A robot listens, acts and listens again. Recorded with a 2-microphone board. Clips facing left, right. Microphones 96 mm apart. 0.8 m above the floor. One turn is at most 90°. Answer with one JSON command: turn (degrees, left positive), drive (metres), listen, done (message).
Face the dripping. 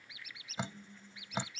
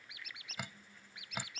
{"turn": 25}
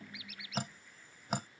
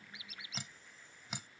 {"turn": 90}
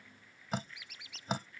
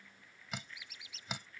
{"turn": 40}
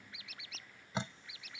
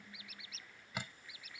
{"turn": 25}
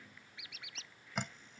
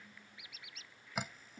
{"done": "Facing the dripping."}